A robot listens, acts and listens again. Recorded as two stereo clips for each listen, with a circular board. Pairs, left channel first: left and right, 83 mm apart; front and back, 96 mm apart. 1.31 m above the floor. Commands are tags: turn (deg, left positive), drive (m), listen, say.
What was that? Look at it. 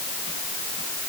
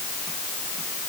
<listen/>
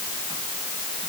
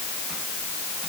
<listen/>
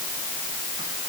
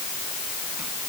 <say>I can't make out anything.</say>